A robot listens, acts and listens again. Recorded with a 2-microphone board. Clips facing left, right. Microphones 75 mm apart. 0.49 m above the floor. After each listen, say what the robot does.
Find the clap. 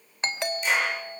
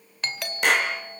Turn 70° right.
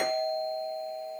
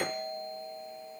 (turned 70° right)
Keep listening.
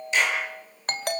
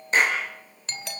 Turn 40° right.
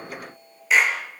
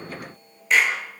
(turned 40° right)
Found it: a clap, straight ahead, over 4 m away.